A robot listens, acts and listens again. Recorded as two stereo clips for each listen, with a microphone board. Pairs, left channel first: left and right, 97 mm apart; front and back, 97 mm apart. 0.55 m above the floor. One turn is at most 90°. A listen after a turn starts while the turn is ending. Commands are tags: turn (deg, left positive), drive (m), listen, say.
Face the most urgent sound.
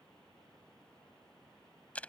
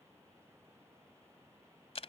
<listen/>
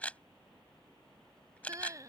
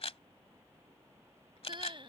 <turn deg="-90"/>
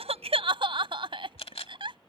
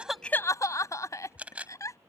<turn deg="-55"/>
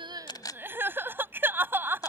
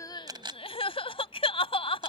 <turn deg="-20"/>
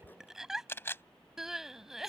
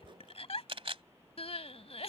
<say>Facing the crying.</say>